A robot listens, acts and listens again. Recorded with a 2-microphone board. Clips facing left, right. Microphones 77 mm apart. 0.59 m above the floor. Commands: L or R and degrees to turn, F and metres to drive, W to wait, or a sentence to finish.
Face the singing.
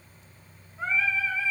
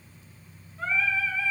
L20
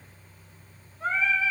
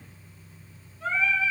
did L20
L135
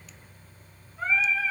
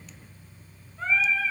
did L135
L10
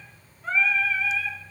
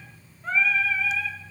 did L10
Found it: singing, straight ahead.